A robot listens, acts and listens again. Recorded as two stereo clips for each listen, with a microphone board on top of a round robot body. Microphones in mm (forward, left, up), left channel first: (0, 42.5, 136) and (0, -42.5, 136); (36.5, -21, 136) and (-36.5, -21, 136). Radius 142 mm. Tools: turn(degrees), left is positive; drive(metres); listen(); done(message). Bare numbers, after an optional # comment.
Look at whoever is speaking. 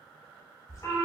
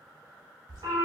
listen()
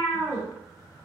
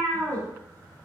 listen()
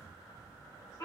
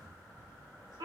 done("I can't make out anyone speaking, only a cat meowing.")